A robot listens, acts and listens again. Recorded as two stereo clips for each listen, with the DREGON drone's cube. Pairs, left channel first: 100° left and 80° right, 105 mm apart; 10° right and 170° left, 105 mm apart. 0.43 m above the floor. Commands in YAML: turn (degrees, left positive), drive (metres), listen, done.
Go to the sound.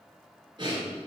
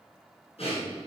turn: -35
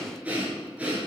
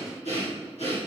drive: 1.0
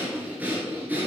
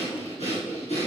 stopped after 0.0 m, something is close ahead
done: "Something is in my way. I am facing the breathing but have not reached it."